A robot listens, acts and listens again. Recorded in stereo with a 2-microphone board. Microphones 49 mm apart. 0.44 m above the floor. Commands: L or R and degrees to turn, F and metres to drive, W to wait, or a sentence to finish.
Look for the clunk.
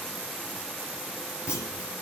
L60
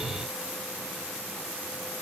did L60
W
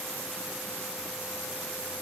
I heard a clunk, but can't make it out now. It was about straight ahead or 60° left.